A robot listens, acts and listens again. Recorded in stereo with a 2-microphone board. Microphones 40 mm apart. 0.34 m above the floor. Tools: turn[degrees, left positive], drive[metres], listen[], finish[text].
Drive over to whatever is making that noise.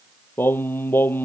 Thought: The singing: about 70° left or 110° left.
Action: turn[70]
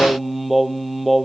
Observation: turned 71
Action: drive[1.0]
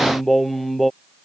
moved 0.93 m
Action: drive[1.0]
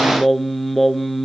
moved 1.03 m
Action: drive[1.0]
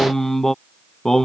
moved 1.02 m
Thought: The singing is now 10° left.
Action: turn[10]
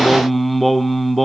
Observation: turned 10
Action: drive[1.0]
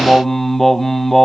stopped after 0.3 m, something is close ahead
Thought: The singing is now 10° left.
Action: turn[10]
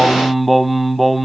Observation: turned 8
Action: finish[Arrived at the singing, straight ahead.]